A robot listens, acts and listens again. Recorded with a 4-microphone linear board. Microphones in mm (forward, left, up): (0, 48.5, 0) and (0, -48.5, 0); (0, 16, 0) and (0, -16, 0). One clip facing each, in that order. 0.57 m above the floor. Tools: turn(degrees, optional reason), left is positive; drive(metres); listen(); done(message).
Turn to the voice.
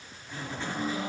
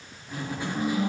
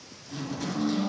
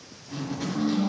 listen()
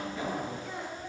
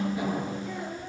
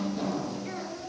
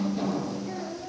turn(degrees=65, reason="The child speaking: about 65° left or 115° left.")
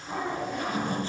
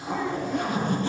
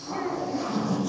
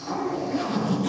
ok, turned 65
listen()
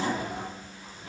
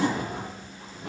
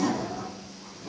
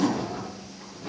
listen()
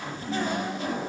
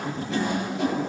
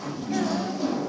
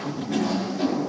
done("I heard a child speaking, but can't make it out now. It was about straight ahead or 50° left.")